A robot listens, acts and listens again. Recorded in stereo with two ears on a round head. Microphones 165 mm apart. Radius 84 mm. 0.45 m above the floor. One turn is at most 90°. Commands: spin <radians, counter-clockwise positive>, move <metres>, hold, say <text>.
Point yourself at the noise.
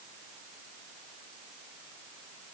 hold
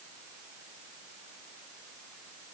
hold
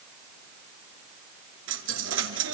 spin -1.57
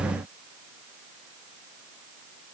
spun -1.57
say Facing where the dropped coin came from. I can't hear it now.